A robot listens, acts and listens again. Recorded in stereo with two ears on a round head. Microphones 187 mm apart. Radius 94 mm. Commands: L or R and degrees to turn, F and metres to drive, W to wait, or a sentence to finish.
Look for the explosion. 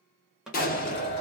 L40
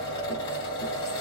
W
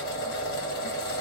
I heard an explosion, but can't make it out now. It was about straight ahead or 100° left.